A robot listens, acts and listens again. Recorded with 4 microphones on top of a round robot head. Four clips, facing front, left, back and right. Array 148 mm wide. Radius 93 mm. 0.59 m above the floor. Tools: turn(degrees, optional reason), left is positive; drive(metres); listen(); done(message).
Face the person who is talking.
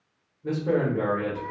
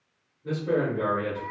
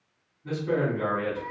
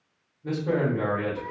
turn(degrees=-25, reason="The man speaking: 25° right.")
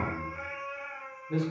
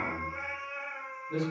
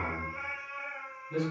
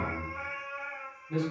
done("Facing the man speaking.")